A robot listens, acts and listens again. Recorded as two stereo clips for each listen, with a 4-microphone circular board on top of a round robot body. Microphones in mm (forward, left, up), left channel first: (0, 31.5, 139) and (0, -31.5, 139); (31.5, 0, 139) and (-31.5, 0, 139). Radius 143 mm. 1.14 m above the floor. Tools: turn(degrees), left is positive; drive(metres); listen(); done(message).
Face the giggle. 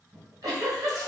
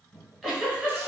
turn(degrees=-85)
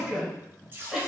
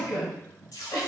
done("Found it: a giggle, straight ahead, 1 to 2 m away.")